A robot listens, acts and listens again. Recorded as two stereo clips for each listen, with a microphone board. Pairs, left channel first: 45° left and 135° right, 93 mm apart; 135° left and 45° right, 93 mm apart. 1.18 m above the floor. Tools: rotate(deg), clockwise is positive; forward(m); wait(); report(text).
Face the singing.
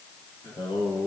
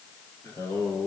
rotate(-75)
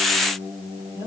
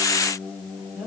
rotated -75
rotate(-40)
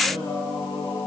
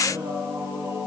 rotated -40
rotate(-15)
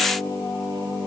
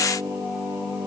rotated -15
report("Facing the singing.")